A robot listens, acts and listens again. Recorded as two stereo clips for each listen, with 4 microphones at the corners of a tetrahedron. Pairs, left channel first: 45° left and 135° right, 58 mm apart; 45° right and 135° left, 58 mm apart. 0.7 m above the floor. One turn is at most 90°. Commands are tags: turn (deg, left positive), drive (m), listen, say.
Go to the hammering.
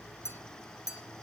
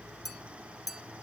<listen/>
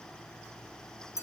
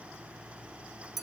<listen/>
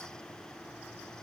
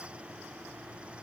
<say>I can't make out hammering to turn to.</say>